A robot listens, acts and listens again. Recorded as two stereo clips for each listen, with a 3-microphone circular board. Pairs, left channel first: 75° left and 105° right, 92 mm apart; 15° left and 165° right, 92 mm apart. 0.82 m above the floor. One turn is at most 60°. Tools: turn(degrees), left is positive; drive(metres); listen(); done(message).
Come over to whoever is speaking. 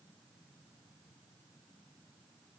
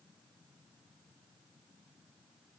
listen()
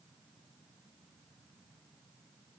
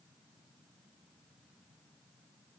listen()
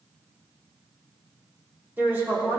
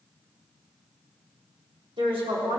turn(degrees=-60)
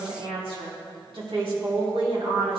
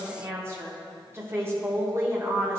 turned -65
turn(degrees=-60)
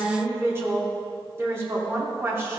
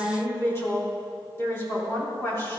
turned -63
turn(degrees=-45)
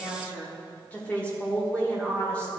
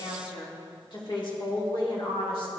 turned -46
drive(metres=1.0)
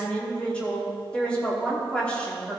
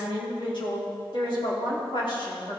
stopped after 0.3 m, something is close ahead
done("Blocked. The woman speaking is further on, straight ahead.")